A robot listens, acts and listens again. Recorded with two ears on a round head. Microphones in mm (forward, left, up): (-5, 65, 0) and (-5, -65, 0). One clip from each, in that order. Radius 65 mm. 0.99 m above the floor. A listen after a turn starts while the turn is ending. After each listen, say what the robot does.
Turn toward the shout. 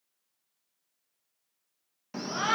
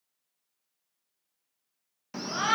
Turn 20° right.
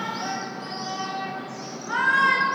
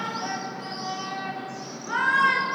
Found it: a shout, straight ahead, under 1 m away.